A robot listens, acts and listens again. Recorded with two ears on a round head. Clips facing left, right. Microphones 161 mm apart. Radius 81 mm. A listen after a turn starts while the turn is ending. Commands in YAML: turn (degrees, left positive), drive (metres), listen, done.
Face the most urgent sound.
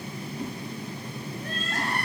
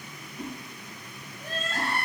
turn: 30
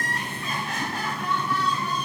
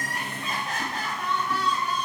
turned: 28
turn: -30
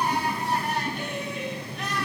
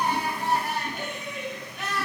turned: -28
done: "Found it: crying, straight ahead."